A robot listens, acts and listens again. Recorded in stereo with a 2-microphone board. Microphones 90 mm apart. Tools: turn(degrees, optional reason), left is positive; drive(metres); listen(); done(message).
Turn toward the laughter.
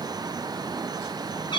listen()
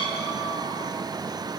listen()
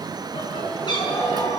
turn(degrees=90)
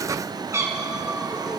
listen()
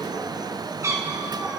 listen()
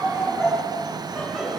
done("Facing the laughter, over 4 m away.")